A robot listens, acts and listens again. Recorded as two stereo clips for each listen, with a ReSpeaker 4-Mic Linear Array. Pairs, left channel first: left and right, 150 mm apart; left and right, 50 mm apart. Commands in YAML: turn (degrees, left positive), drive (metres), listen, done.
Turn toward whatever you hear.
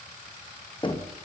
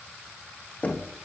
turn: 35
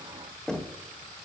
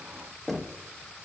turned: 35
done: "Found it: knocking, straight ahead."